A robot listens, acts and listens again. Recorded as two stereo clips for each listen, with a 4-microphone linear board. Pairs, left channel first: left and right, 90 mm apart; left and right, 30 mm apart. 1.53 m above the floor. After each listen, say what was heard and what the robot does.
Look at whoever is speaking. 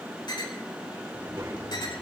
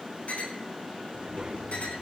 The child speaking: about 35° right or 145° right. Turn 35° right.
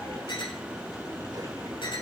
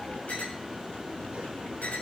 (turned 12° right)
Keep listening.
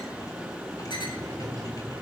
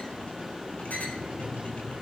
So it is at 130° right. Turn 130° right.
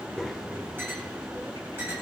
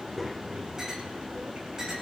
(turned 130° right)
Found it: a child speaking, straight ahead, over 4 m away.